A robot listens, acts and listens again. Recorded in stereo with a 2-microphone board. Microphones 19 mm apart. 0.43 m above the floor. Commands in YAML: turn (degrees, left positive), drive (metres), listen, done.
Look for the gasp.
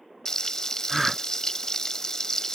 turn: -30
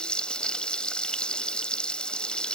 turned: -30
listen: true
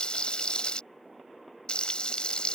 done: "I heard a gasp, but can't make it out now. It was about 25° left or 145° right."